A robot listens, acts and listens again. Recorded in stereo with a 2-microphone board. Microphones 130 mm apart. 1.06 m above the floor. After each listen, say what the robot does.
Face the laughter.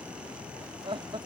Turn 45° right.
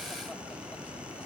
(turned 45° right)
Keep listening.
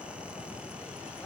Keep listening.
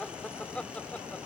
Turn 10° left.
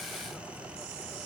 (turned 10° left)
Keep listening.
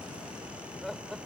Found it: laughter, straight ahead.